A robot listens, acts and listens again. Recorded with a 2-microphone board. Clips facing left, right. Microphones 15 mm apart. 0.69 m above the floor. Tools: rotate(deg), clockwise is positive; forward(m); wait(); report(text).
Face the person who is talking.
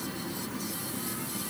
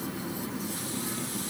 wait()
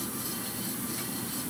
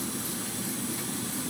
wait()
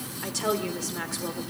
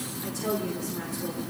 rotate(-50)
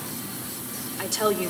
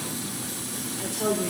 rotate(-80)
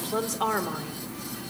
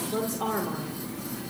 rotate(-40)
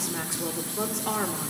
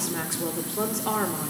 report("Found it: a woman speaking, straight ahead, 2 to 4 m away.")